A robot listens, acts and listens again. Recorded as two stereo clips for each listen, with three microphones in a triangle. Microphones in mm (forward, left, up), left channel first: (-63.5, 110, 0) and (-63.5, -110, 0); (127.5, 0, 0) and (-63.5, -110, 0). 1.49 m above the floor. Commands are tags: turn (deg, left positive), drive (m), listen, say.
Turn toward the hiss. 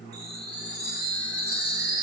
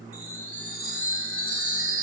<listen/>
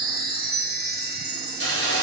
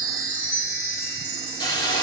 <turn deg="100"/>
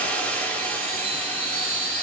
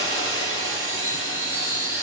<turn deg="10"/>
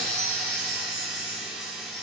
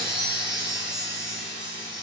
<listen/>
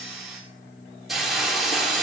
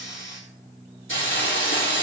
<say>Found it: a hiss, straight ahead.</say>